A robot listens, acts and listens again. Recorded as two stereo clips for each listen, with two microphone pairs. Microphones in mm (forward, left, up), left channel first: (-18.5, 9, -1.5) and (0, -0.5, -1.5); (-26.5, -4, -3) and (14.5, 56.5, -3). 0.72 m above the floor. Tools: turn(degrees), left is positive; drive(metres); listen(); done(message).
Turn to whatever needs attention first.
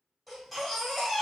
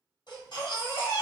turn(degrees=-125)
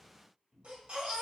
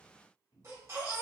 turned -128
done("Facing the baby crying.")